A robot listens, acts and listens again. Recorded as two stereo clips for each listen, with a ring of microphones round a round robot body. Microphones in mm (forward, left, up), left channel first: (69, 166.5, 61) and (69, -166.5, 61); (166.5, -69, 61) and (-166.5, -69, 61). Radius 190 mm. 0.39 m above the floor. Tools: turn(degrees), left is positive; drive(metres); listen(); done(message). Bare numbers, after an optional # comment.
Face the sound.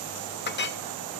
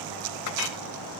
# The clink: 30° left.
turn(30)
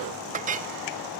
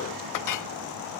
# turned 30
# The clink is now 25° right.
turn(-25)
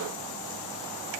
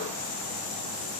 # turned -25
listen()
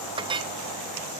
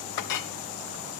# The clink is now 15° right.
turn(-15)
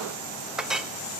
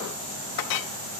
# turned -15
done("Facing the clink, under 1 m away.")